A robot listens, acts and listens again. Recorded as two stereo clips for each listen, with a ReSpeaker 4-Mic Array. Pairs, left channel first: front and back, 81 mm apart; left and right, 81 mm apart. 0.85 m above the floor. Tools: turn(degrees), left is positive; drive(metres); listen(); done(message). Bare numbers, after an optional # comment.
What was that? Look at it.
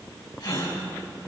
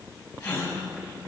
# The gasp: 45° left.
turn(45)
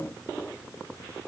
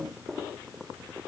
done("Facing where the gasp came from. I can't hear it now.")